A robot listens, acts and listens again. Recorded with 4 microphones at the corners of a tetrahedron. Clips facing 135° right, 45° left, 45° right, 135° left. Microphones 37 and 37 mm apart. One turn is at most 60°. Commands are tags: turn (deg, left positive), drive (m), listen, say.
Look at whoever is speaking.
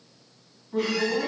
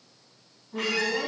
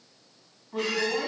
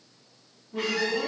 <turn deg="-60"/>
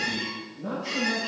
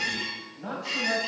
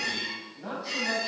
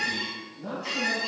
<turn deg="15"/>
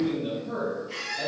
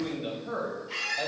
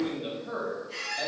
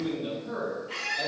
<turn deg="25"/>
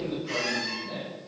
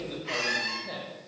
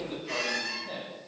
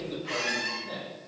<turn deg="35"/>
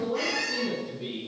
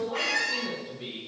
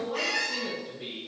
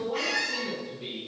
<say>Found it: a man speaking, straight ahead, 1 to 2 m away.</say>